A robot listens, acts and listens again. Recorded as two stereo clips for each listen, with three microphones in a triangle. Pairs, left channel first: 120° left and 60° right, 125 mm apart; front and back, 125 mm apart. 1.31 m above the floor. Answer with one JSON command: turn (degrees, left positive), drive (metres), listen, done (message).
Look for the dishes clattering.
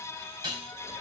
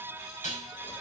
{"turn": -10}
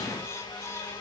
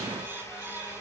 {"listen": true}
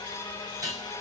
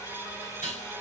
{"done": "Facing the dishes clattering, over 4 m away."}